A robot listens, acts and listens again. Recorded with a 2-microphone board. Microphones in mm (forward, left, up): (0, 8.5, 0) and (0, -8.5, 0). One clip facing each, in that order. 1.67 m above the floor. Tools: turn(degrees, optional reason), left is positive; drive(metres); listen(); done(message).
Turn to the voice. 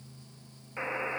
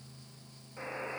listen()
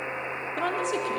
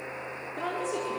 turn(degrees=45, reason="The woman speaking: about 45° left or 135° left.")
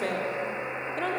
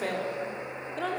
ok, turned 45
done("Facing the woman speaking, over 4 m away.")